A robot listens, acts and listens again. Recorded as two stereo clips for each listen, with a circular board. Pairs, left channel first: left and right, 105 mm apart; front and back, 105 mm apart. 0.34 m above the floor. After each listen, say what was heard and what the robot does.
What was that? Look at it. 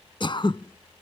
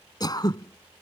The throat clearing: 50° left. Turn 50° left.
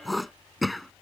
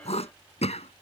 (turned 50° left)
Facing the throat clearing.